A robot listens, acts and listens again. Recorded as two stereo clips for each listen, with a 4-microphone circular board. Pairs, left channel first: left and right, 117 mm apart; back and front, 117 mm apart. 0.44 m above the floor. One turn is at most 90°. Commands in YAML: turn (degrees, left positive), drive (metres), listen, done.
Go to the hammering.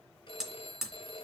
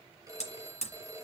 turn: -90
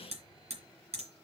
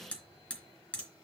turn: -90
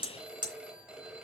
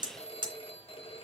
turn: -45
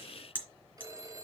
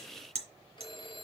turn: -15
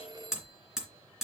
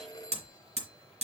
drive: 1.0
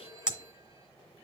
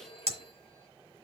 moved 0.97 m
turn: -10
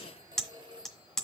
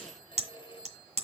drive: 1.0
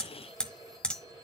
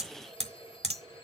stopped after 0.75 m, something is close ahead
turn: 10
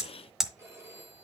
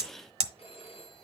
done: "I am next to the hammering."